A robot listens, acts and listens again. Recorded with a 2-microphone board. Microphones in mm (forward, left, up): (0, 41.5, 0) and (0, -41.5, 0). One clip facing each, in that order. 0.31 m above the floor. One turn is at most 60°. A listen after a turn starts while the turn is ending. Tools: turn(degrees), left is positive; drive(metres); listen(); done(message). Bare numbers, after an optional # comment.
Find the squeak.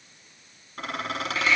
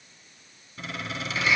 # The squeak: about 60° left or 120° left.
turn(60)
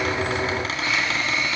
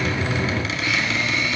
# So it is at 45° left.
turn(45)
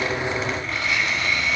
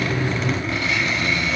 done("Found it: a squeak, straight ahead.")